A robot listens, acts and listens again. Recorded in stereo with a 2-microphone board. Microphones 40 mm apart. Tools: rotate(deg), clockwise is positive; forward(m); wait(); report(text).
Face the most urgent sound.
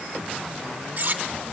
wait()
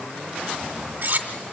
wait()
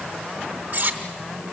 report("I can't make out anything urgent, only cutlery clinking.")